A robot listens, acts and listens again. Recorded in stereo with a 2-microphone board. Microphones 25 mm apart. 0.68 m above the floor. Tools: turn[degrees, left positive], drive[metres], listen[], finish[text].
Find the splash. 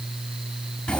Action: listen[]
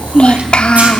Action: listen[]
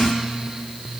Action: finish[I can't make out a splash to turn to.]